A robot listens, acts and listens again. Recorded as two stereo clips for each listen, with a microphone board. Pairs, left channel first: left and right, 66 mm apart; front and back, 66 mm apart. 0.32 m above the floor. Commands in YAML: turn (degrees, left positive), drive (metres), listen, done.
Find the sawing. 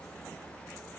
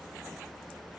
listen: true
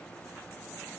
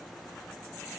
listen: true
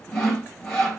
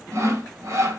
turn: 175
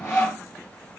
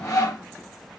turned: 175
turn: 35
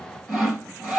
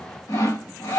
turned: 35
done: "Found it: sawing, straight ahead."